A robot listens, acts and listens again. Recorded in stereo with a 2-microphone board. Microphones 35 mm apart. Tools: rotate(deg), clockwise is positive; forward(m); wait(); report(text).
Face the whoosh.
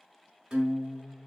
wait()
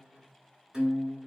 wait()
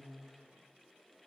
report("I can't make out a whoosh, only a guitar.")